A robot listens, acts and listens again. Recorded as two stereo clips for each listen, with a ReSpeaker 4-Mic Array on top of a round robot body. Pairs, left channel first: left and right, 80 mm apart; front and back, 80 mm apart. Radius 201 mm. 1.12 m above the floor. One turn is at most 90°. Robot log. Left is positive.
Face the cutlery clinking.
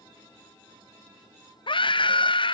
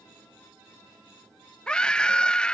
cmd idle
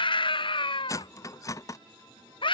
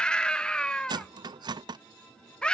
note: The cutlery clinking: 145° left.
cmd yaw +90
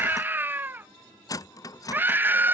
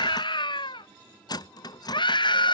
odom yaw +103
note: The cutlery clinking is now 40° left.
cmd yaw +40
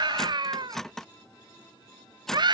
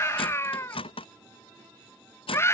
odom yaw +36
end: Facing the cutlery clinking.